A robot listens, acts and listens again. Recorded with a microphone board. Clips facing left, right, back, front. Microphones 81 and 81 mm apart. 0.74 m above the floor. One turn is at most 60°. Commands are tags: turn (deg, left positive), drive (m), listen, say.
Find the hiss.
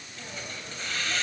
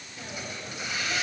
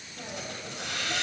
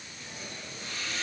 <turn deg="-60"/>
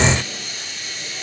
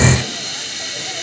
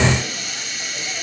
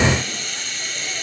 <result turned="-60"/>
<turn deg="-60"/>
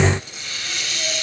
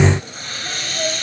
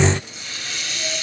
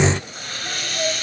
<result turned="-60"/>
<turn deg="-40"/>
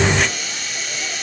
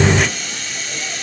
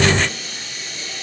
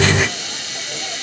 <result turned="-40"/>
<say>Found it: a hiss, straight ahead.</say>